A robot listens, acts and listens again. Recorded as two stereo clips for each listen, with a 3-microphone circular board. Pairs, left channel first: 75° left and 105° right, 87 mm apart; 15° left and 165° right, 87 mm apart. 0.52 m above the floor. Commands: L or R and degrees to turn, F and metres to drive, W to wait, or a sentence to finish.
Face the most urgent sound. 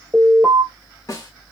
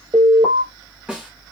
L180
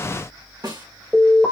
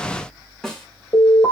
R10
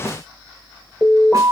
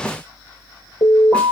Facing the alarm, 2 to 4 m away.